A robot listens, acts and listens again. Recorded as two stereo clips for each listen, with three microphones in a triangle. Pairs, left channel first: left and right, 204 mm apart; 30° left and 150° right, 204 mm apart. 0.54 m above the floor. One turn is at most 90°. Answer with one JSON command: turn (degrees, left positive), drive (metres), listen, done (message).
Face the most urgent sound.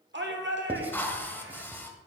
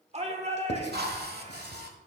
{"turn": -90}
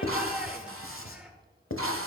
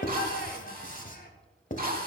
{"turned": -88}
{"turn": -10}
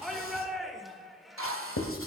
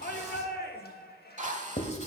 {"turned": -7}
{"done": "Found it: a shout, straight ahead."}